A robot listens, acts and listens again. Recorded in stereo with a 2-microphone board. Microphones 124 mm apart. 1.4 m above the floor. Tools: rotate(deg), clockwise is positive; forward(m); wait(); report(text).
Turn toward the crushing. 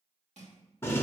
rotate(70)
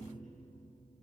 wait()
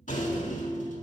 wait()
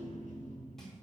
report("I heard crushing, but can't make it out now. It was about straight ahead or 40° right.")